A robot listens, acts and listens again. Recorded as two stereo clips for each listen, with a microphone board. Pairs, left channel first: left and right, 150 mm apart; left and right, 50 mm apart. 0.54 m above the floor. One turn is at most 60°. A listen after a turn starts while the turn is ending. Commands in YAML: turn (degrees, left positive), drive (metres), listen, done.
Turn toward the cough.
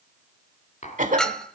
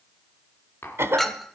turn: -60
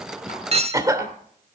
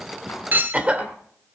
turn: -25
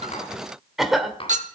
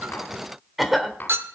done: "Facing the cough, 1 to 2 m away."